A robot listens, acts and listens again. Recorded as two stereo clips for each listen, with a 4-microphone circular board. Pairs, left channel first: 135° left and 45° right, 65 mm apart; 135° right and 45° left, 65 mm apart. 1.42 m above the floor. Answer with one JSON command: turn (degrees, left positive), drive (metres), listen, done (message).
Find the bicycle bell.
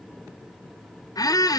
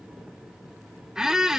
{"listen": true}
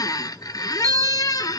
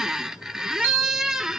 {"turn": -15}
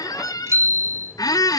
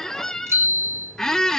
{"done": "Found it: a bicycle bell, straight ahead, 2 to 4 m away."}